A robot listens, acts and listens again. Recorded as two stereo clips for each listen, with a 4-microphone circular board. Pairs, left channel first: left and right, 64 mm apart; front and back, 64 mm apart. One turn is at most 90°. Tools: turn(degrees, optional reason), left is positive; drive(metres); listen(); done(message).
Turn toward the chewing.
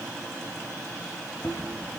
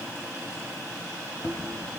turn(degrees=40, reason="The chewing: 40° left.")
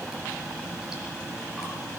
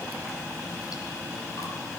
turn(degrees=-10, reason="The chewing is now 10° right.")
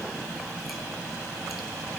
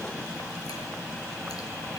listen()
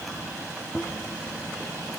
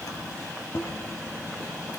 done("Found it: chewing, straight ahead.")